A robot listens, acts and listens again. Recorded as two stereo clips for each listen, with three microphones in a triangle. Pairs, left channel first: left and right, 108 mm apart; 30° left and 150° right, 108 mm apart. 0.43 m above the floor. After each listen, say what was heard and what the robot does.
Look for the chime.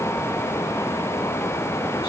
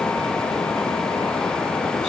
Keep listening.
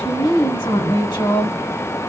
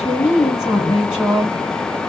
Keep listening.
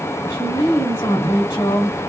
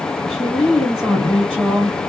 I can't make out a chime to turn to.